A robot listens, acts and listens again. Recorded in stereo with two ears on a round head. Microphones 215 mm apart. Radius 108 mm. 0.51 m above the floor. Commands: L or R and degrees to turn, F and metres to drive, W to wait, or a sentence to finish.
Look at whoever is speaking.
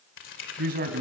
R40
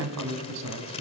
R100
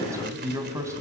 R15
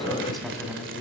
Found it: a man speaking, straight ahead.